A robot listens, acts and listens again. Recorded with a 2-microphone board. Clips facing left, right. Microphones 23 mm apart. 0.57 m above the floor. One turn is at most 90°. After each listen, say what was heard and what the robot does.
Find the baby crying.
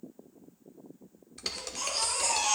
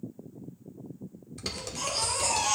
Turn 30° left.
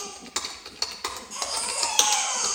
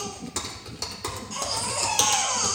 So it is at 15° right. Turn 15° right.
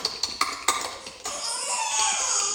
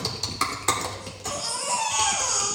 Found it: a baby crying, straight ahead, 2 to 4 m away.